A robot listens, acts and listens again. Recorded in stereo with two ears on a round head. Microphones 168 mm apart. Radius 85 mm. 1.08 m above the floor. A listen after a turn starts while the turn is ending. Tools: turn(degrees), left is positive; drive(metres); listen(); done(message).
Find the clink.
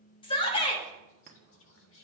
turn(degrees=-45)
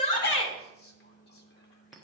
done("Found it: a clink, straight ahead.")